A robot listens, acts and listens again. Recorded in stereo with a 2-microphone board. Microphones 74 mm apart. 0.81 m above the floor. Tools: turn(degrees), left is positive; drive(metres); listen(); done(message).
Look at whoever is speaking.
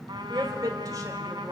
turn(degrees=-50)
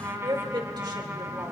turn(degrees=-80)
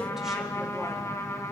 listen()
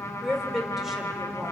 done("Facing the woman speaking, 2 to 4 m away.")